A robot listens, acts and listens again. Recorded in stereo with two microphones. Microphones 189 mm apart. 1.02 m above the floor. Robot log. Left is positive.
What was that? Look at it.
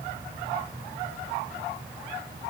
cmd idle
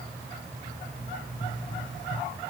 cmd yaw +90
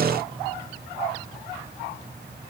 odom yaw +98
note: Nothing new. It was at 10° right.
cmd yaw -10
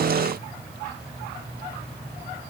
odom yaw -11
end: Facing where the pop came from. I can't hear it now.